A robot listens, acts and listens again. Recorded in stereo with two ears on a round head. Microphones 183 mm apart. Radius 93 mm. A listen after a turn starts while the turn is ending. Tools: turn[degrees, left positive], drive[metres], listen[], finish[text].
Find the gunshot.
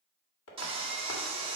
Action: listen[]
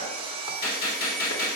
Thought: The gunshot: about 50° left or 130° left.
Action: turn[50]
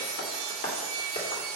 Action: listen[]
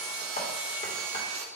Action: finish[I heard a gunshot, but can't make it out now. It was about straight ahead or 80° left.]